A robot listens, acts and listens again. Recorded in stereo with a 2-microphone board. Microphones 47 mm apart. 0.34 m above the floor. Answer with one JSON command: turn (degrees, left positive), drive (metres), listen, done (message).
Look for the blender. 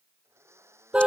{"turn": -90}
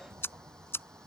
{"listen": true}
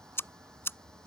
{"listen": true}
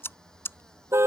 {"done": "I heard a blender from this way, but can't make it out now."}